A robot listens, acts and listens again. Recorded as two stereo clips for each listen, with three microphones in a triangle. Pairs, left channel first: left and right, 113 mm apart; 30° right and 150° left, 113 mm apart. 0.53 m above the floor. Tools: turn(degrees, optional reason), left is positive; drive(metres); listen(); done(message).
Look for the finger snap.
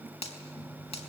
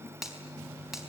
turn(degrees=65, reason="The finger snap: 65° left.")
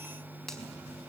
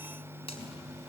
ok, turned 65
listen()
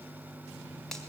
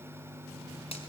listen()
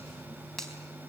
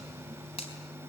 done("Facing the finger snap.")